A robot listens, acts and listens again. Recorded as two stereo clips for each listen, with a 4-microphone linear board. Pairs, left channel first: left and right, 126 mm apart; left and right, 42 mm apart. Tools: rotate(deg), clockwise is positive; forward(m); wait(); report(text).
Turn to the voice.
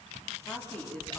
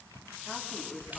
rotate(-30)
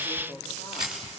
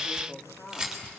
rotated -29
rotate(-140)
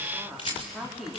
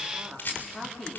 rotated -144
report("Facing the woman speaking.")